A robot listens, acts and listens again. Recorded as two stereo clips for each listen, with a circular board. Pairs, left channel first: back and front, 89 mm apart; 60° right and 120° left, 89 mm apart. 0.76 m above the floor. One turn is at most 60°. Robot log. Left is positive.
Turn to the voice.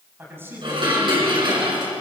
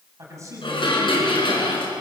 note: The man speaking: 65° left.
cmd yaw +60
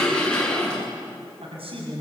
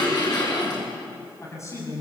end: Facing the man speaking, over 4 m away.